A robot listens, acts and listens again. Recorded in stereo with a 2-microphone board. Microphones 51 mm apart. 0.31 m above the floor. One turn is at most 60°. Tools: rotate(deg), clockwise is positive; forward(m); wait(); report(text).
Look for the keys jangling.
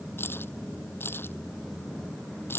rotate(-50)
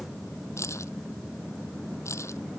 rotate(-60)
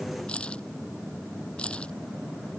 rotate(-20)
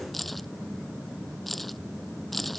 report("Found it: keys jangling, straight ahead.")